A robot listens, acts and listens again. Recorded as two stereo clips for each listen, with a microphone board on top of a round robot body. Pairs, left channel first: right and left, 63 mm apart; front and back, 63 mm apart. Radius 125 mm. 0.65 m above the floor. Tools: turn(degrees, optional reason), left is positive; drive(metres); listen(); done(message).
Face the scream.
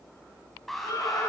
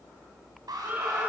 turn(degrees=-120, reason="The scream: 120° right.")
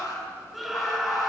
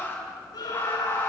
done("Found it: a scream, straight ahead.")